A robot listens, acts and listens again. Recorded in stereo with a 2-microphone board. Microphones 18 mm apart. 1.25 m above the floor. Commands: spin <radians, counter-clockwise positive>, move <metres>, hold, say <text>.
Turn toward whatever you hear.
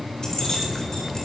spin 0.70
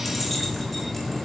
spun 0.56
say Facing the keys jangling.